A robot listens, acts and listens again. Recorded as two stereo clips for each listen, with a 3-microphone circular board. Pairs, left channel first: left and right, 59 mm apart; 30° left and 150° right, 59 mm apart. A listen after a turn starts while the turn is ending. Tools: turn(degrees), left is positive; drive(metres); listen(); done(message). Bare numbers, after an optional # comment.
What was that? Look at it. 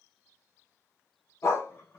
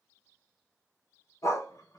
# The dog barking: 50° left.
turn(50)
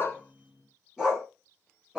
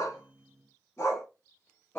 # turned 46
# The dog barking is now 15° right.
turn(-15)
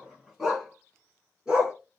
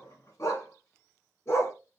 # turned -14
# The dog barking is now 10° right.
turn(-10)
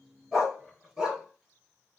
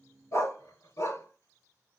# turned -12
done("Facing the dog barking.")